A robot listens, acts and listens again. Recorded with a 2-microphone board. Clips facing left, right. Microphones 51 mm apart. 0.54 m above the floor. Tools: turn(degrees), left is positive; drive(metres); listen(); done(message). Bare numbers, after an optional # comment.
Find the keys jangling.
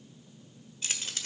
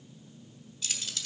# The keys jangling: about 40° left or 140° left.
turn(40)
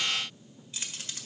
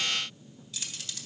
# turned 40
# The keys jangling: about 35° left or 145° left.
turn(35)
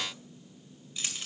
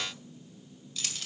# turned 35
# So it is at 20° left.
turn(20)
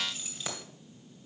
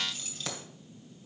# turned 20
# The keys jangling is now 10° left.
turn(10)
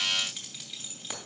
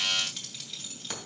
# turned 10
done("Found it: keys jangling, straight ahead, 2 to 4 m away.")